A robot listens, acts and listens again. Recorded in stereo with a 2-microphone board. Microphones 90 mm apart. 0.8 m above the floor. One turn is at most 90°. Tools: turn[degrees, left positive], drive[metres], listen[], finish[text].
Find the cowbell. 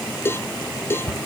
Thought: The cowbell: about 25° left or 155° left.
Action: turn[25]
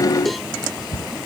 Action: listen[]
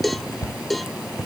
Action: finish[Facing the cowbell.]